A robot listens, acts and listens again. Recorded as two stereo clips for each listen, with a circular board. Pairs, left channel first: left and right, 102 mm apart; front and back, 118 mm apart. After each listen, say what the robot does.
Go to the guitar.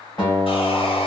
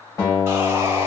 Turn 55° left.
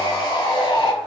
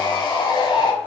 Keep listening.
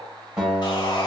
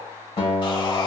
Turn 10° right.
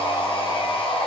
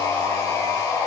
Keep listening.
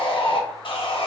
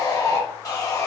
Keep listening.
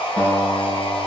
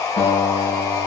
Drive 1.0 m forward.
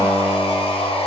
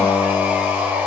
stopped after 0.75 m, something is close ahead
I am next to the guitar.